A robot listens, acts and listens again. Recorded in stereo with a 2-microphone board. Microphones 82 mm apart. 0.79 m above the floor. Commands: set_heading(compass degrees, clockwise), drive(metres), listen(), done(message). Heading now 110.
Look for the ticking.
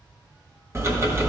set_heading(145)
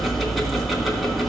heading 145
done("Facing the ticking, 1 to 2 m away.")